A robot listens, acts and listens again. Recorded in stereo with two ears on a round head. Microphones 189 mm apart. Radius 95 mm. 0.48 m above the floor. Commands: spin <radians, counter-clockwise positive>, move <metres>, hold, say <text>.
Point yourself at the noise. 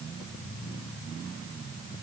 hold
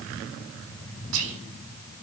spin -1.22
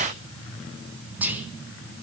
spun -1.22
spin -0.17
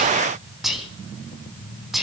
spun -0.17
say Facing the whispering.